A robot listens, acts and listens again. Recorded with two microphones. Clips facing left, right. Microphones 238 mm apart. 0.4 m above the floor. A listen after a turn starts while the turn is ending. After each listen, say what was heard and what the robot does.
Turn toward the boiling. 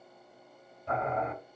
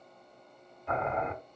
The boiling: about 35° left or 145° left. Turn 35° left.
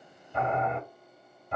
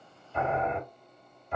So it is at 100° left. Turn 100° left.
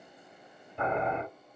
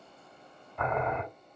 The boiling is now 40° left. Turn 40° left.
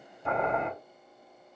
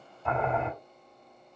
Found it: boiling, straight ahead.